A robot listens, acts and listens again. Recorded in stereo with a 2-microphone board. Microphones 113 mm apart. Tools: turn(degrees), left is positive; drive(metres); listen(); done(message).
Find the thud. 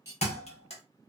turn(degrees=65)
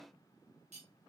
listen()
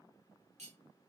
done("I heard a thud, but can't make it out now. It was about straight ahead or 50° left.")